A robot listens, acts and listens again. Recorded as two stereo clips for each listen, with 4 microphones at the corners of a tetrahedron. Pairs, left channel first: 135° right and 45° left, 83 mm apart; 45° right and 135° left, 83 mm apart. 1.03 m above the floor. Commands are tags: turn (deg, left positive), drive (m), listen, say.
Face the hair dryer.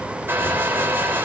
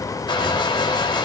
<turn deg="-20"/>
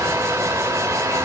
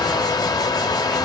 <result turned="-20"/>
<turn deg="-10"/>
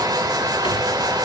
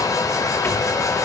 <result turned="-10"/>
<say>Found it: a hair dryer, straight ahead.</say>